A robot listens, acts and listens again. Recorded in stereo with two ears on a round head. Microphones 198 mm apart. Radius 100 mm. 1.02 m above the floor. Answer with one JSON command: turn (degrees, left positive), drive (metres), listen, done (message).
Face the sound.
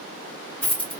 {"turn": 30}
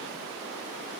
{"listen": true}
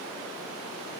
{"done": "I heard a dropped coin, but can't make it out now. It was about 25° right or 145° left."}